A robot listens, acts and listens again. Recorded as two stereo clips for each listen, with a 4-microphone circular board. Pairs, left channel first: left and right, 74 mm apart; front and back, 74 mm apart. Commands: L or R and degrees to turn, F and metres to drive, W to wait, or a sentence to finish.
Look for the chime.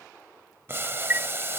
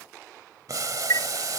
R30
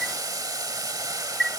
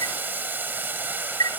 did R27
Facing the chime.